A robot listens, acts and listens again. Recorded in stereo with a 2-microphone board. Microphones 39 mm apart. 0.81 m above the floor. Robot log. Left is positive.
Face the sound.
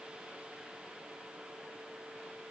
cmd idle
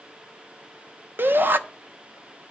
note: The shout: about 60° right or 120° right.
cmd yaw -60
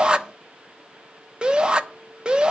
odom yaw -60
note: So it is at 25° right.
cmd yaw -25
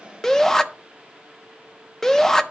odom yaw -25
note: The shout is now 15° left.
cmd yaw +15
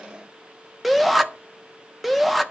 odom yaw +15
end: Found it: a shout, straight ahead, under 1 m away.